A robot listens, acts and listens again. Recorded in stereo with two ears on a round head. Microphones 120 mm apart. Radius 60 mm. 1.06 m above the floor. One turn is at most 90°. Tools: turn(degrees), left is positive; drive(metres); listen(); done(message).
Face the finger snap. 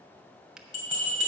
turn(degrees=-30)
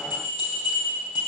listen()
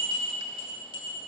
listen()
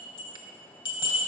done("I heard a finger snap, but can't make it out now. It was about 25° left or 145° right.")